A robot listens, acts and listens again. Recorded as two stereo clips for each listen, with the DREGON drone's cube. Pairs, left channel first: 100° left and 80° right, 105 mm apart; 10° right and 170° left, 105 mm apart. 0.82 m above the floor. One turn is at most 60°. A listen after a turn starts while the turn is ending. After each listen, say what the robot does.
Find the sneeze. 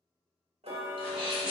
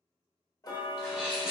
Turn 60° right.
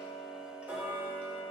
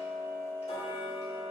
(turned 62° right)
Turn 45° right.
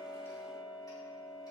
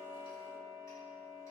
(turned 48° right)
Facing where the sneeze came from. I can't hear it now.